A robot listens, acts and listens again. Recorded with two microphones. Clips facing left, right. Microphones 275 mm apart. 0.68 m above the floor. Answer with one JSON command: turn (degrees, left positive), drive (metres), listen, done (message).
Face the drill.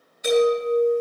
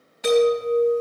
{"listen": true}
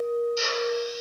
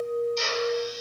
{"turn": 30}
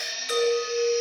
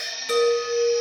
{"listen": true}
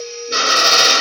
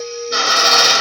{"turn": 140}
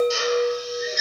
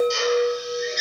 {"done": "Found it: a drill, straight ahead."}